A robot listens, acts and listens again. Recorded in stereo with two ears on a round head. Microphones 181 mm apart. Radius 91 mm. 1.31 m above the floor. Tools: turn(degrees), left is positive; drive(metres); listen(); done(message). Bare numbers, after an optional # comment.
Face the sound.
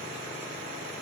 listen()
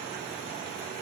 listen()
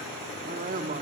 # The woman speaking: about 40° right or 140° right.
turn(-40)
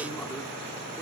listen()
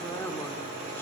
# So it is at 10° left.
turn(10)
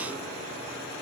listen()
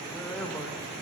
listen()
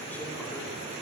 done("Facing where the woman speaking came from. I can't hear it now.")